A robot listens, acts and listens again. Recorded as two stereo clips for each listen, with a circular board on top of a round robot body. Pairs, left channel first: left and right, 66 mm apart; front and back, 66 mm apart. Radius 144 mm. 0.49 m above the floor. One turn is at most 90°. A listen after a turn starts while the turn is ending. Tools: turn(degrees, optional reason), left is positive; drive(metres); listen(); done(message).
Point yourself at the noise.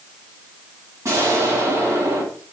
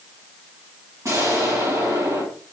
turn(degrees=-90, reason="The explosion: 140° right.")
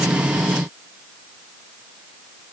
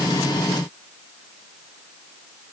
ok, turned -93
turn(degrees=-45, reason="Nothing new. It was at 45° right.")
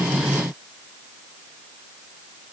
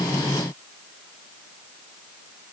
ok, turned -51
done("I heard an explosion from this way, but can't make it out now.")